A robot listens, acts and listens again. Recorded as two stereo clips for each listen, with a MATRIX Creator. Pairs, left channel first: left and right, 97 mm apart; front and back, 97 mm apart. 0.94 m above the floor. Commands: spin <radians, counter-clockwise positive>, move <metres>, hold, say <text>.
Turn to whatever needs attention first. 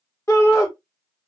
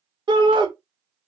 spin 2.62
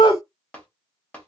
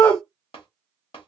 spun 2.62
spin 1.13
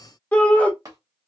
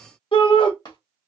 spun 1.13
spin 0.26
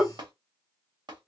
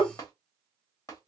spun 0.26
say Facing the shout.